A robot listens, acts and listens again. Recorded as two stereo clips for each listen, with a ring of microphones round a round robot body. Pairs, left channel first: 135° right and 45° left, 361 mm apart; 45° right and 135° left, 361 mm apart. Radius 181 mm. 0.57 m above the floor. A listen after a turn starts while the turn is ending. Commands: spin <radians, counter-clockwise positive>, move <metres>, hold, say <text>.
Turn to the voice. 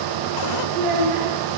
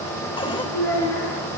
spin 0.26
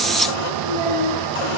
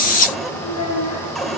say Facing the child speaking.